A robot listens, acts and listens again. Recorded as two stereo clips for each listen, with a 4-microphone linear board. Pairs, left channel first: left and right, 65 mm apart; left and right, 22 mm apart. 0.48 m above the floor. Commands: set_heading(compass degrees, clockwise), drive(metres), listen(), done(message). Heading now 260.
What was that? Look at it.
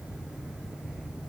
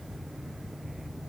listen()
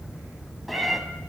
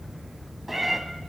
set_heading(230)
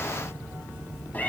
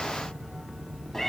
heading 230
set_heading(80)
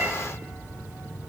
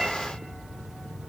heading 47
set_heading(77)
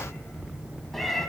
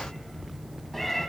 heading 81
done("Found it: a cat meowing, straight ahead.")